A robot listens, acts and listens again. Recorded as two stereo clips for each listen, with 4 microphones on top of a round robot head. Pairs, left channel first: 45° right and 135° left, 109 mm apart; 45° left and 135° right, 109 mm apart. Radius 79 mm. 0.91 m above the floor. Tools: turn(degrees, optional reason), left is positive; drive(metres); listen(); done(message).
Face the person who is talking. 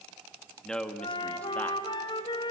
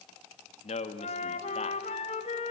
turn(degrees=35, reason="The man speaking: 35° left.")
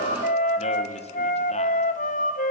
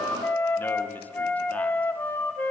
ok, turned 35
listen()
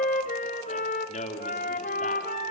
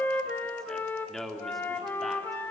turn(degrees=-45, reason="The man speaking is now 45° right.")
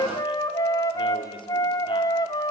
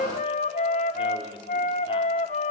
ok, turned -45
listen()
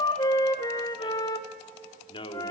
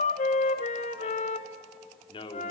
done("Found it: a man speaking, straight ahead.")